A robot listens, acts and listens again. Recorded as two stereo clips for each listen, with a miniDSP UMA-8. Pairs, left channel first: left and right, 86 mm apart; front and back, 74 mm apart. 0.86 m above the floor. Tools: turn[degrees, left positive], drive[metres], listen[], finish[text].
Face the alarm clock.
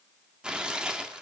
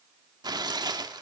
Action: listen[]
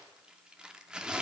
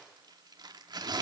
Action: listen[]
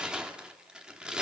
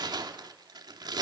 Action: finish[I can't make out an alarm clock to turn to.]